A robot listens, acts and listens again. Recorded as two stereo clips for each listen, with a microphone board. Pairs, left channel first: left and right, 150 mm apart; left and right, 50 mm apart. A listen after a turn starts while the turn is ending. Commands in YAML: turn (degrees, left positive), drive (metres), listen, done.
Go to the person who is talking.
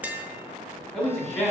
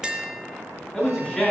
turn: 15
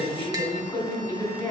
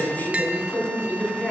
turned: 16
turn: 150
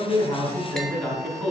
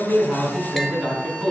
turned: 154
drive: 1.0
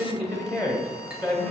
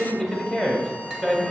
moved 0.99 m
drive: 1.0
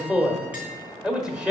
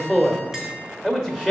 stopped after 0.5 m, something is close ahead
done: "I am next to the man speaking."